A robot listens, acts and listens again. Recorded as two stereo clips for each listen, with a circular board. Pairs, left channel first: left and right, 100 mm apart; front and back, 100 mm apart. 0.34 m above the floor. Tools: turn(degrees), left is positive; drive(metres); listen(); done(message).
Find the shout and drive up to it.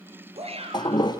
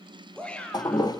turn(degrees=-80)
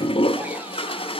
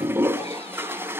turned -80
listen()
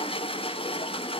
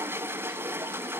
listen()
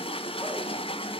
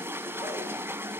done("Facing where the shout came from. I can't hear it now. I did not reach it.")